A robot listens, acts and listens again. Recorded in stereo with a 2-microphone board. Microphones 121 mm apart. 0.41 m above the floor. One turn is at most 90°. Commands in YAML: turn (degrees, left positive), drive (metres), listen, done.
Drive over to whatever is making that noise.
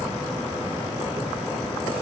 listen: true
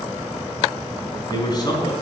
turn: 35
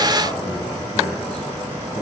listen: true
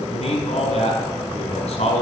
turn: 90
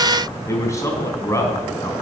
turn: 25
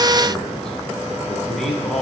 drive: 1.0
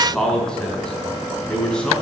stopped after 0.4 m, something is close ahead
done: "Blocked. The man speaking is further on, straight ahead."